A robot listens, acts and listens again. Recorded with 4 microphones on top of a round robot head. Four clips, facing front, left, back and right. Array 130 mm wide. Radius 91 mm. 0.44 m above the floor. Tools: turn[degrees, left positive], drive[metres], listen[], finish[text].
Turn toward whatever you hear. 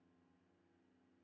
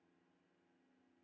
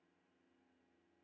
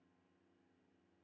Action: listen[]
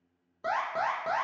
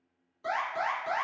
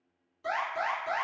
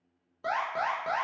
Thought: The alarm: 35° right.
Action: turn[-35]
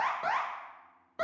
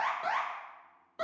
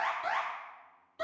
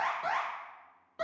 Action: finish[Facing the alarm.]